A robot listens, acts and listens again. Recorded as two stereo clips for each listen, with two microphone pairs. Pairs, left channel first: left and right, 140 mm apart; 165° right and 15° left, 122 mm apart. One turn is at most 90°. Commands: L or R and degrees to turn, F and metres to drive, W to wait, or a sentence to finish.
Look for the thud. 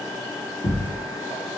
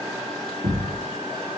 L40
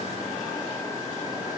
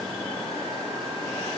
Facing where the thud came from. I can't hear it now.